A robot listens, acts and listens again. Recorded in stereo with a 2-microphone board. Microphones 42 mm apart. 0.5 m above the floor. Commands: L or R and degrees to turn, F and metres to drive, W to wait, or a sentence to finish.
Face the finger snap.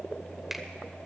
R30
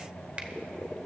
R145
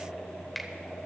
Facing the finger snap, 1 to 2 m away.